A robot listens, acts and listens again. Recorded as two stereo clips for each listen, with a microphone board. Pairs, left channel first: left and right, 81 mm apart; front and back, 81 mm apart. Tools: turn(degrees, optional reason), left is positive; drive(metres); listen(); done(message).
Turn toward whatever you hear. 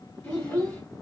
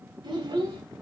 turn(degrees=170, reason="The child speaking: 170° left.")
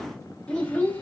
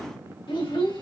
turn(degrees=20, reason="The child speaking is now 20° left.")
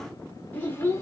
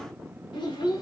turn(degrees=30, reason="The child speaking is now 30° left.")
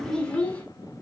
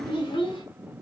turn(degrees=15, reason="The child speaking is now 15° left.")
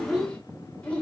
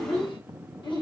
turn(degrees=15, reason="The child speaking is now 15° left.")
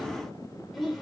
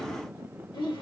done("Facing the child speaking, 1 to 2 m away.")